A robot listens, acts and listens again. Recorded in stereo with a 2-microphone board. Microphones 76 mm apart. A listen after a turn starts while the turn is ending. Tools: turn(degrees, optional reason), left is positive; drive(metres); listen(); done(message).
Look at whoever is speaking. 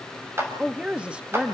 turn(degrees=-30)
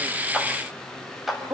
turn(degrees=-135, reason="So it is at 135° right.")
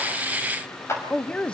turn(degrees=10, reason="The woman speaking is now 10° left.")
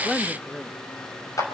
done("Found it: a woman speaking, straight ahead, 1 to 2 m away.")